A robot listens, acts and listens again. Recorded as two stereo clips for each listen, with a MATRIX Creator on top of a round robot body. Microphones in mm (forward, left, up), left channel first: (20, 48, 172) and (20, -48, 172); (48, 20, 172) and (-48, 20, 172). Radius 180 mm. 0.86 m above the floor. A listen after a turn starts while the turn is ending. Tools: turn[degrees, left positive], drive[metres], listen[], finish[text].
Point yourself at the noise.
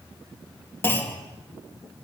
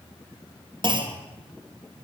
Thought: The clunk: 155° left.
Action: turn[155]
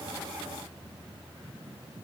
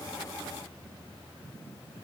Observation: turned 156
Action: finish[I heard a clunk from this way, but can't make it out now.]